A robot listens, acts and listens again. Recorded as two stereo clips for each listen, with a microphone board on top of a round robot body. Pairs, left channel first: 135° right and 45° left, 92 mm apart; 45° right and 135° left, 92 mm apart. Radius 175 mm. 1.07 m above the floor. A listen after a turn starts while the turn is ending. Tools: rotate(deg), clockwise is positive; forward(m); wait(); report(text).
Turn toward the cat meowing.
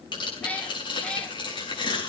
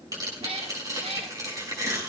rotate(-145)
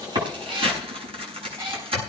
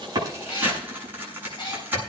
report("Facing the cat meowing, 2 to 4 m away.")